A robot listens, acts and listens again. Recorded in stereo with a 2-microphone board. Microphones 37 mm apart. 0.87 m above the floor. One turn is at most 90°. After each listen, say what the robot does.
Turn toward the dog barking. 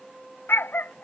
Turn 90° left.
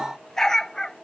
Turn 10° left.
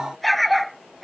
Facing the dog barking.